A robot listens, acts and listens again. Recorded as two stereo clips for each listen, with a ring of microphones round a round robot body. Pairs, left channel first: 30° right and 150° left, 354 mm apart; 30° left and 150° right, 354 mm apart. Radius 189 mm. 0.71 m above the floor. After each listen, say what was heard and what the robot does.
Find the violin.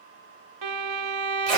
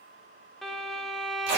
The violin: 120° left. Turn 120° left.
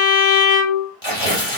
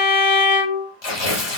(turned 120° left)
Found it: a violin, straight ahead, 1 to 2 m away.